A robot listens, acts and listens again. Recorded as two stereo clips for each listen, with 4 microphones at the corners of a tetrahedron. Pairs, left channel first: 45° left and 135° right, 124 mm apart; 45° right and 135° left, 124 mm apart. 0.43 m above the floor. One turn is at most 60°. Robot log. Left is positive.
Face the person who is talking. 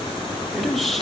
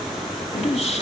note: The man speaking: 45° right.
cmd yaw -45
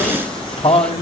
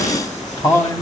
note: The man speaking is now 15° left.
cmd yaw +15
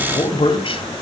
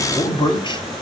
end: Found it: a man speaking, straight ahead, 2 to 4 m away.